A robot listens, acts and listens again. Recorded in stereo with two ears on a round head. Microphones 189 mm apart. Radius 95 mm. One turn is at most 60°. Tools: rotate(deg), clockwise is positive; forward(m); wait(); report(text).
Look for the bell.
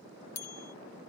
rotate(-60)
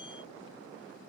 rotate(-30)
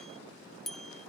report("Found it: a bell, straight ahead.")